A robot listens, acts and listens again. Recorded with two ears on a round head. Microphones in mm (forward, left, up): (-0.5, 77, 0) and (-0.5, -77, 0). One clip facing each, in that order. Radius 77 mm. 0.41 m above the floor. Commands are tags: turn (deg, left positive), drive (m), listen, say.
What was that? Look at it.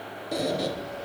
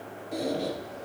<turn deg="70"/>
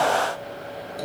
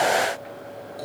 <turn deg="25"/>
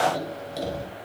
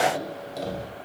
<turn deg="10"/>
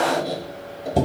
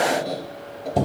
<say>Facing the squeak, under 1 m away.</say>